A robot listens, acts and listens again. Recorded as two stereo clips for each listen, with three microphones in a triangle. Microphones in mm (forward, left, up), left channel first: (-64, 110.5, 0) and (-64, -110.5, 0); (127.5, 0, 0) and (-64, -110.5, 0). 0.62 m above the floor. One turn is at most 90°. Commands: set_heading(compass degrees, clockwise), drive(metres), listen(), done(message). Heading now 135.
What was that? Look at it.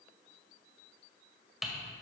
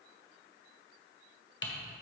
done("Facing the typing on a keyboard, 1 to 2 m away.")